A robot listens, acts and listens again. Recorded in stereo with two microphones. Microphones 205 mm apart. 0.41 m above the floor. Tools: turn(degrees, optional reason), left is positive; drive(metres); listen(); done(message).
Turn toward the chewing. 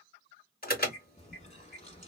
turn(degrees=35, reason="The chewing: about 35° left or 145° left.")
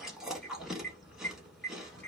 done("Found it: chewing, straight ahead.")